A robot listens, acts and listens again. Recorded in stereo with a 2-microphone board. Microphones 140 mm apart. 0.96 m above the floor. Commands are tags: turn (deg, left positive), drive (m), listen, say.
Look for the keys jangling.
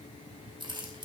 <turn deg="-35"/>
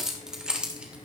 <say>Facing the keys jangling, 2 to 4 m away.</say>